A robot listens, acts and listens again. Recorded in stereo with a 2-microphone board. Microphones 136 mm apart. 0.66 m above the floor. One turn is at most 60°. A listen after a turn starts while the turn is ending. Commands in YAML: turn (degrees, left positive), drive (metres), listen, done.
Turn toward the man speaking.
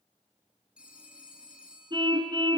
listen: true
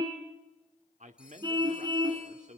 turn: -60
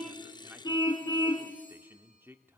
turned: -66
turn: -20
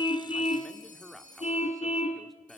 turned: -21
done: "Found it: a man speaking, straight ahead."